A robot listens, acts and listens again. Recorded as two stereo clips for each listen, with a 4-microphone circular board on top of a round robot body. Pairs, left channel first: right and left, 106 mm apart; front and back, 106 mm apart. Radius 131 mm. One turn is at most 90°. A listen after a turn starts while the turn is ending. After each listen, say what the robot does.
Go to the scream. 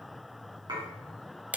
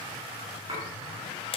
Keep listening.
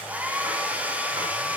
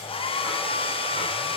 Keep listening.
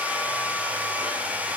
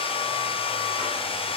I can't make out a scream to turn to.